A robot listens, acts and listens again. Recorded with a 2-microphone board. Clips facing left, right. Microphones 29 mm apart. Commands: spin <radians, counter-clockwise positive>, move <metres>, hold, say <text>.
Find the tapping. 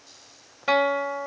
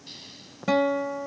spin -0.35
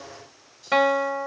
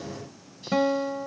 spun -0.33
hold
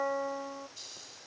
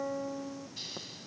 hold
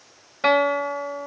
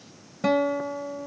say I heard tapping, but can't make it out now. It was about straight ahead or 140° right.